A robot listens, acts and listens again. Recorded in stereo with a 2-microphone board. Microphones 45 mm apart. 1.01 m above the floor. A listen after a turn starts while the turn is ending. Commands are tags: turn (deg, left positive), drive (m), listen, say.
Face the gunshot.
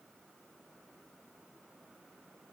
<listen/>
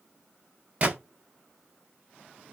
<turn deg="-35"/>
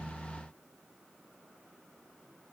<listen/>
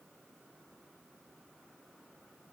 <say>I heard a gunshot, but can't make it out now. It was about straight ahead or 110° right.</say>